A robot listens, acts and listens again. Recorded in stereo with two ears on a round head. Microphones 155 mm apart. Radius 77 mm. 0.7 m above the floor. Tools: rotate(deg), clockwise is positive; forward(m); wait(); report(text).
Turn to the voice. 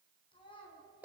rotate(-30)
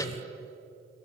wait()
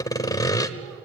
wait()
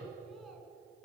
report("I heard a child speaking, but can't make it out now. It was about straight ahead or 120° left.")